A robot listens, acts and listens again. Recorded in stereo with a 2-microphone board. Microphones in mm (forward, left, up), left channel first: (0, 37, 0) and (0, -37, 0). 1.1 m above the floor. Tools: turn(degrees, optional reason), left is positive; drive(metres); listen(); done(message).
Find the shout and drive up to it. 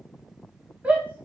turn(degrees=-20, reason="The shout: about 20° right or 160° right.")
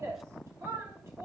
turn(degrees=-140, reason="So it is at 140° right.")
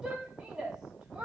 turn(degrees=-10, reason="The shout is now 10° right.")
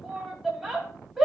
drive(metres=1.0)
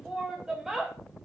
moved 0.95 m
drive(metres=1.0)
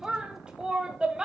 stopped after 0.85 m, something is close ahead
turn(degrees=-10, reason="The shout is now 10° right.")
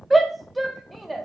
done("Arrived at the shout, straight ahead.")